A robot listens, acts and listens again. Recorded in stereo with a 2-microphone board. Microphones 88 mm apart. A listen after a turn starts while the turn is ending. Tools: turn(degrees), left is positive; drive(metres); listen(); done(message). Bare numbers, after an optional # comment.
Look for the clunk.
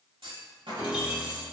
turn(-90)
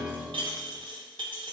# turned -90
done("Facing where the clunk came from. I can't hear it now.")